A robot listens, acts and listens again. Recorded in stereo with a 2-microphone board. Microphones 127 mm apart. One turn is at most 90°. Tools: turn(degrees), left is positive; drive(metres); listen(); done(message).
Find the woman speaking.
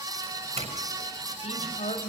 turn(degrees=65)
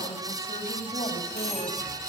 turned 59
turn(degrees=50)
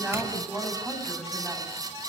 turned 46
done("Facing the woman speaking.")